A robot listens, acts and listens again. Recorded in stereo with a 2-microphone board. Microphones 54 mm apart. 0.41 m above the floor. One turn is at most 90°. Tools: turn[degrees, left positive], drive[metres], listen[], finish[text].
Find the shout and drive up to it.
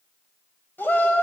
Thought: The shout: about 40° left or 140° left.
Action: turn[40]
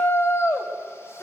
Thought: So it is at 95° left.
Action: turn[90]
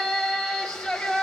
Thought: The shout is now 10° left.
Action: turn[10]
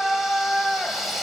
Action: drive[1.0]
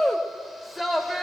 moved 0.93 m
Action: drive[1.0]
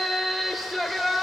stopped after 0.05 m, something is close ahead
Action: finish[I am next to the shout.]